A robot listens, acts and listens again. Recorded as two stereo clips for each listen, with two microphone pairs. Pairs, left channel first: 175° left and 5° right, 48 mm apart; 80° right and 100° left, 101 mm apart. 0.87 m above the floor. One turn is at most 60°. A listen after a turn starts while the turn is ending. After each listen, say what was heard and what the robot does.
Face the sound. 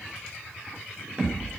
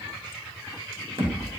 The thud: 65° left. Turn 60° left.
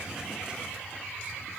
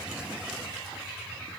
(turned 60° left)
I heard a thud from this way, but can't make it out now.